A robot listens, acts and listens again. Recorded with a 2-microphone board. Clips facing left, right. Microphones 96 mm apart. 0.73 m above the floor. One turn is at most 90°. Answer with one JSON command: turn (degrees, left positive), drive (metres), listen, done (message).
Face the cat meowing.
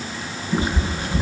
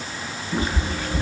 {"turn": 30}
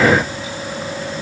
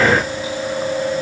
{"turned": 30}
{"listen": true}
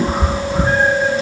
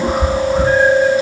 {"turn": 90}
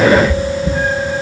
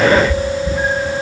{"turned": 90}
{"turn": 90}
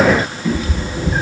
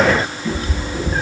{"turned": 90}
{"turn": 15}
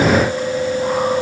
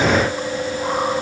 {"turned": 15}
{"listen": true}
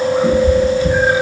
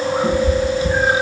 {"done": "Found it: a cat meowing, straight ahead."}